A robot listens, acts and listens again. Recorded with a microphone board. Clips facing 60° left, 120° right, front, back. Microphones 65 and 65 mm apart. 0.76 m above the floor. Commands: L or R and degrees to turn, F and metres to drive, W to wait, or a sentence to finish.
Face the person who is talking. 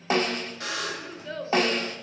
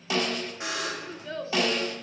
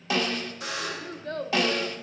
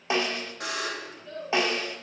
R30
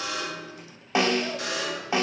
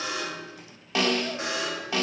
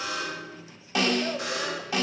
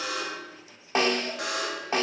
W
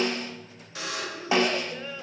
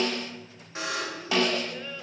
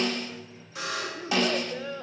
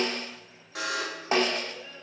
R20
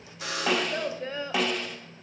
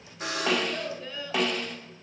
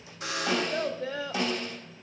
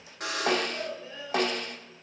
Facing the child speaking.